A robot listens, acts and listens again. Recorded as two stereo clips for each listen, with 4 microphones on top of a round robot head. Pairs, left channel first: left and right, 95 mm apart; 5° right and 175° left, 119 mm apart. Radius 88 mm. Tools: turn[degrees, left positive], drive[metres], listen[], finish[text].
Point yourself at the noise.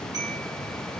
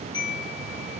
Thought: The chime: 50° right.
Action: turn[-50]
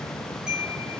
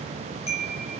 Action: finish[Facing the chime, 1 to 2 m away.]